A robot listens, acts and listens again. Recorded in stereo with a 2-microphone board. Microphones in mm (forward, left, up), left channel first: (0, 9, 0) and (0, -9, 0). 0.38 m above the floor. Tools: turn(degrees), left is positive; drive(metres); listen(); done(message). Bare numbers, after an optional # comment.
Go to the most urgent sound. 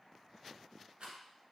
listen()
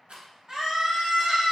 # The scream: about 30° right or 150° right.
turn(-30)
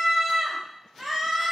drive(1.0)
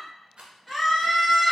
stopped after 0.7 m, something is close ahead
done("Arrived at the scream, straight ahead.")